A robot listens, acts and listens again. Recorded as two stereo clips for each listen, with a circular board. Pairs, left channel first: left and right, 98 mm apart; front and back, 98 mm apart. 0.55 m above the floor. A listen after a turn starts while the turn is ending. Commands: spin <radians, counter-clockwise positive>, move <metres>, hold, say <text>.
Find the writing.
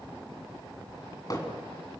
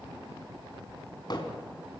hold
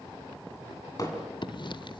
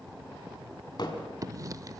spin 2.18
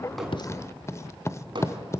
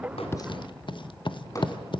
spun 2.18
spin 0.52
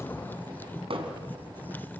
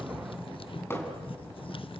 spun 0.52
spin 0.35
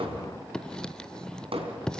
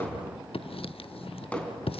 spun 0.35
spin 0.17
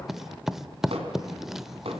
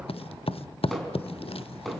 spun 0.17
say Facing the writing.